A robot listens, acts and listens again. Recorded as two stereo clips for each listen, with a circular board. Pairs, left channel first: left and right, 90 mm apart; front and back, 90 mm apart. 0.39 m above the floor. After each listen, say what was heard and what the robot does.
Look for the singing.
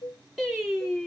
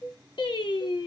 Facing the singing.